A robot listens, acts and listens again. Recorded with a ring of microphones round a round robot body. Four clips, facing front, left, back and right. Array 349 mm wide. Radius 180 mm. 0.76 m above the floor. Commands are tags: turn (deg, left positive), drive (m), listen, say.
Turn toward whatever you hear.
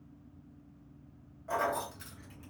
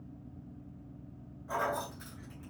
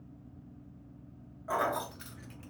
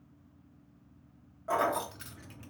<turn deg="-120"/>
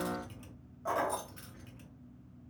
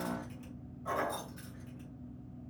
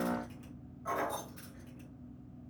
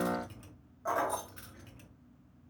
<turn deg="-55"/>
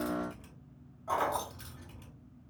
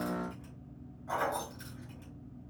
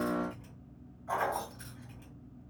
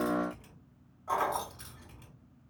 <turn deg="-35"/>
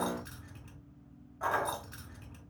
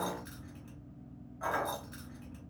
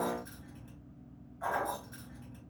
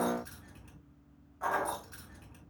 <say>Facing the keys jangling, 1 to 2 m away.</say>